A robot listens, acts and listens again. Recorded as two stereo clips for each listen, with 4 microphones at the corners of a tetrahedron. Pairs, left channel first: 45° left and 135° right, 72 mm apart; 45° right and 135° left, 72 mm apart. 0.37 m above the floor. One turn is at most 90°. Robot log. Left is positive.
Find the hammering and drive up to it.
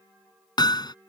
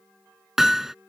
note: The hammering: 50° left.
cmd yaw +50
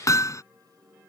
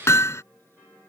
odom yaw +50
cmd fwd 1.0
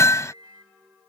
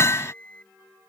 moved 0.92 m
cmd fwd 1.0
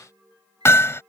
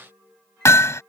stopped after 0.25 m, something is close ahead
end: Arrived at the hammering, straight ahead.